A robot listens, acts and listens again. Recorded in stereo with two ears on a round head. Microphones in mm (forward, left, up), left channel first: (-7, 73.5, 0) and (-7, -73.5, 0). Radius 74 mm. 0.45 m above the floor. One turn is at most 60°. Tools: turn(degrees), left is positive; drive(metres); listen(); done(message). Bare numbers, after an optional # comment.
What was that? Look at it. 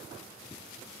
listen()
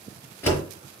turn(30)
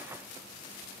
listen()
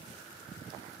done("I heard a door slam, but can't make it out now. It was about 15° right or 135° left.")